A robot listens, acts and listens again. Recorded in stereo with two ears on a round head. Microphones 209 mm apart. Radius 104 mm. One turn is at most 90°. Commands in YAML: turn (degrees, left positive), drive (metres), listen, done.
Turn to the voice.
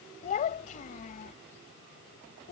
turn: 35
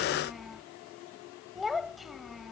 done: "Found it: a child speaking, straight ahead."